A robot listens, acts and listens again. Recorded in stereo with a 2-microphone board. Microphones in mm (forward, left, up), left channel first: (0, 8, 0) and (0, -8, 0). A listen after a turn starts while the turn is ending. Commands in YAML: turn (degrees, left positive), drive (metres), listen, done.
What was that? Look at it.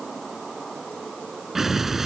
turn: -30
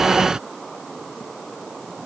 turn: -135
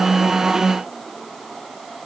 done: "Facing where the explosion came from. I can't hear it now."